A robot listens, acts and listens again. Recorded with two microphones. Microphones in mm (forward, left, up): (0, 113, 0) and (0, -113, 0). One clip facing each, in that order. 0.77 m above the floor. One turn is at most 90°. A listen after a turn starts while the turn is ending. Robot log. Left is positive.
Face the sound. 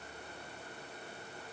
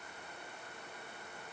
cmd idle
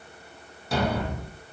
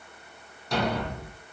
cmd yaw +30
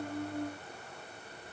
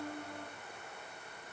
cmd idle
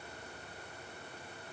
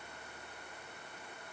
end: I heard a thud, but can't make it out now. It was about 25° right or 145° left.